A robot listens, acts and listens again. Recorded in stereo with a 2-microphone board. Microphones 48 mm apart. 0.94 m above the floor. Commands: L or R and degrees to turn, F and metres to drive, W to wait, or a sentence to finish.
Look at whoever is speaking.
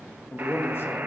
L55
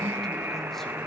W
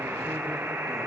W
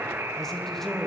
Found it: a man speaking, straight ahead.